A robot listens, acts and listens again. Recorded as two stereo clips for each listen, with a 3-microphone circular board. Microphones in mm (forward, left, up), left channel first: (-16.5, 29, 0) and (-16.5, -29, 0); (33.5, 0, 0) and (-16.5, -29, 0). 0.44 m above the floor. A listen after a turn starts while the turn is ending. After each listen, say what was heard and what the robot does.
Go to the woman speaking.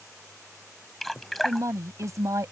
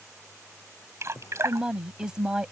The woman speaking: 75° right. Turn 75° right.
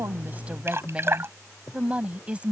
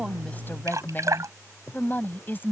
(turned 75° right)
The woman speaking is now 20° right. Turn 20° right.
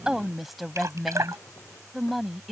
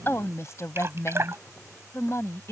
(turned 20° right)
Drive 1.0 m forward.
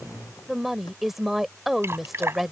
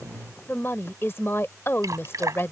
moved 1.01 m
Drive 1.0 m forward.
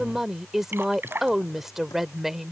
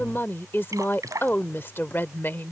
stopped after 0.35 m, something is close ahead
Arrived at the woman speaking, straight ahead.